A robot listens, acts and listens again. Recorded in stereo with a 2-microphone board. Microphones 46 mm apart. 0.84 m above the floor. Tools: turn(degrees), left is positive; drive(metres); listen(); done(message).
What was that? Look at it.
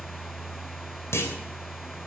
turn(degrees=65)
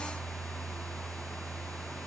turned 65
listen()
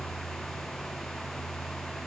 done("I heard a clunk, but can't make it out now. It was about straight ahead or 50° left.")